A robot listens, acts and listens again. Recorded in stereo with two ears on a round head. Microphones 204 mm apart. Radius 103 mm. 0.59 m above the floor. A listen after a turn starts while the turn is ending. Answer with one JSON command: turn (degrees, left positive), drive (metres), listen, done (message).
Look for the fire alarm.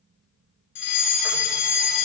{"turn": 55}
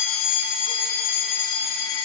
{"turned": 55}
{"turn": 60}
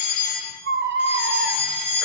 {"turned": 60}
{"done": "Found it: a fire alarm, straight ahead."}